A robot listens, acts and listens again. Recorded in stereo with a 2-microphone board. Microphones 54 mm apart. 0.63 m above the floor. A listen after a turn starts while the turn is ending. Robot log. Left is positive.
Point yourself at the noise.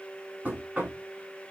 note: The knocking: about 20° right or 160° right.
cmd yaw -20
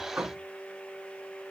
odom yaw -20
note: So it is at 140° right.
cmd yaw -140
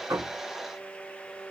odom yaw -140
cmd idle
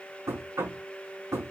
note: The knocking is now 70° right.
cmd yaw -70
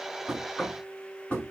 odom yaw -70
note: The knocking is now 20° left.
cmd yaw +20
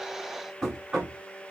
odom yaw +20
end: Found it: knocking, straight ahead.